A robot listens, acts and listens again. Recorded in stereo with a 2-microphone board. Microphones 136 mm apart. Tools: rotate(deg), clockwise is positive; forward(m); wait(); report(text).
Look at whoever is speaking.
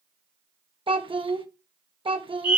rotate(40)
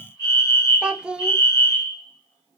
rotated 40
rotate(10)
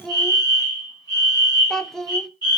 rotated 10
report("Facing the child speaking, under 1 m away.")